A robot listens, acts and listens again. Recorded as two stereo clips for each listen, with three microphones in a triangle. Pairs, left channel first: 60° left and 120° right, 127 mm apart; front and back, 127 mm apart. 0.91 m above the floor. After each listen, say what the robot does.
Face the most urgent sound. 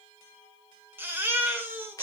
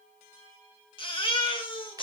Turn 45° right.
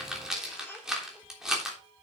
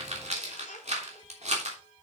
Keep listening.
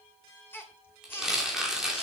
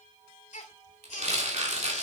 Turn 15° right.
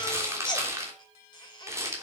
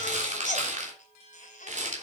Facing the baby crying.